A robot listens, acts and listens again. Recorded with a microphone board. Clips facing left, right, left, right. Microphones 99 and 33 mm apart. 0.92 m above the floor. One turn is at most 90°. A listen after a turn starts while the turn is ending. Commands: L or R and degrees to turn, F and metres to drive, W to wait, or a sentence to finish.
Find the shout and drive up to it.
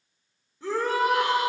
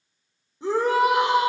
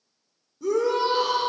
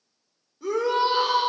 R20
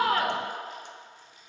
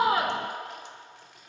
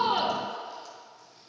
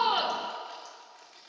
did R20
W
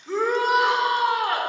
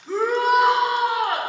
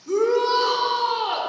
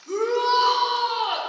F1.0
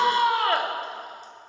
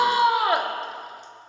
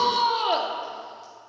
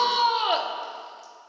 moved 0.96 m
R10
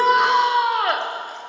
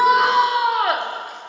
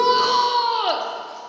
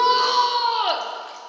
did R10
F1.0
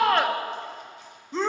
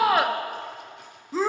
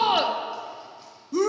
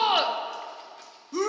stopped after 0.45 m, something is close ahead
Arrived at the shout, straight ahead.